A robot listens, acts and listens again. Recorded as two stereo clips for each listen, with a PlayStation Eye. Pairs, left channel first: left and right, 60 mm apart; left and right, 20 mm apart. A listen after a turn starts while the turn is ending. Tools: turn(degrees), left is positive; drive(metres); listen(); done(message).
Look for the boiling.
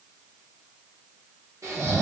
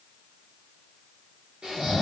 listen()
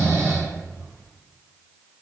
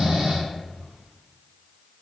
listen()
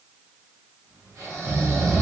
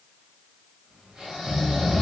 done("I can't make out boiling, only snoring.")